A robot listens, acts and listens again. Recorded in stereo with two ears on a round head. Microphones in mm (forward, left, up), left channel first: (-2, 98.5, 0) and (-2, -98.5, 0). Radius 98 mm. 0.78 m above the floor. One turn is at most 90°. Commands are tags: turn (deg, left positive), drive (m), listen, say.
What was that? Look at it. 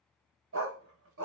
<turn deg="-65"/>
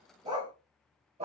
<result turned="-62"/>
<turn deg="-30"/>
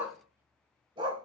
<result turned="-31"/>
<turn deg="-25"/>
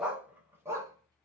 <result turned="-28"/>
<turn deg="-15"/>
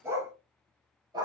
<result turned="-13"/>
<turn deg="-20"/>
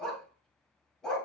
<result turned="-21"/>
<say>Facing the dog barking, 1 to 2 m away.</say>